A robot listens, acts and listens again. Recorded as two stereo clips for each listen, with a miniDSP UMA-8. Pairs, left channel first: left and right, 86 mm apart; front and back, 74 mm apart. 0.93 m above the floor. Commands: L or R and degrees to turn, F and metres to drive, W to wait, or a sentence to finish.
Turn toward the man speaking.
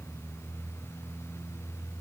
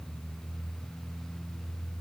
W
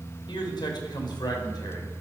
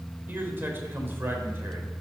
L120
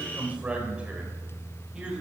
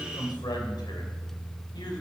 R10
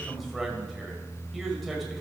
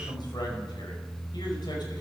Facing the man speaking.